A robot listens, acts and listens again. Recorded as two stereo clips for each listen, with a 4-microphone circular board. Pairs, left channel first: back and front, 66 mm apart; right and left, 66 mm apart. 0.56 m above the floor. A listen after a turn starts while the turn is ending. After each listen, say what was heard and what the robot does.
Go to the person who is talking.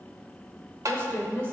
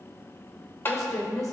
The woman speaking: 120° right. Turn 120° right.
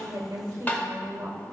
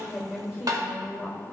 The woman speaking is now 35° left. Turn 35° left.
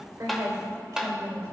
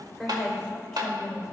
Drive 1.0 m forward.
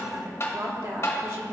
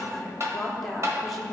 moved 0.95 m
Drive 1.0 m forward.
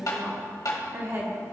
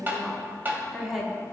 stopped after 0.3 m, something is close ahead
I am next to the woman speaking.